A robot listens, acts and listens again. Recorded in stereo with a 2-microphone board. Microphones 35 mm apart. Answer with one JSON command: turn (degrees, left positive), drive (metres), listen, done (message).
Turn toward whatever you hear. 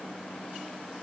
{"listen": true}
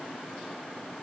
{"listen": true}
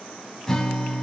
{"turn": 30}
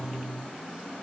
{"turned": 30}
{"turn": -15}
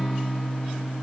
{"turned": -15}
{"done": "Facing the guitar."}